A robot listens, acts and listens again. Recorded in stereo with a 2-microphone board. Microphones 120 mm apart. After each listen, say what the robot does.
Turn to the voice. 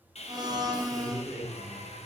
Turn 25° left.
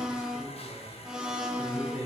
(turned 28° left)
Found it: a man speaking, straight ahead, 2 to 4 m away.